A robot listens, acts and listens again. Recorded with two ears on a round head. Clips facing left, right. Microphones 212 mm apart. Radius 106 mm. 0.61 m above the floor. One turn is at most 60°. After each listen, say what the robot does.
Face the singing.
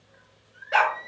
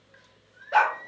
Turn 60° left.
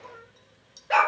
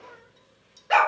Turn 10° right.
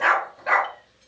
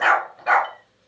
Keep listening.
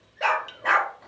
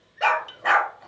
Turn 15° right.
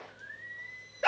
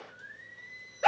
Turn 10° right.
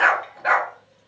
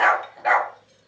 Keep listening.
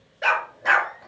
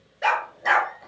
Keep listening.
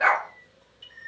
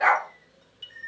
Facing the singing, over 4 m away.